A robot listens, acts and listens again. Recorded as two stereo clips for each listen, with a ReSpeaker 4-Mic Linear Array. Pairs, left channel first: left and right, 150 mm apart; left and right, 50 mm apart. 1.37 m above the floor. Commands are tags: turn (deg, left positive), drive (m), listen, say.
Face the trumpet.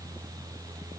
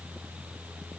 <listen/>
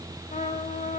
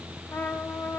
<turn deg="55"/>
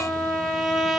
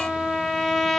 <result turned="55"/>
<say>Found it: a trumpet, straight ahead.</say>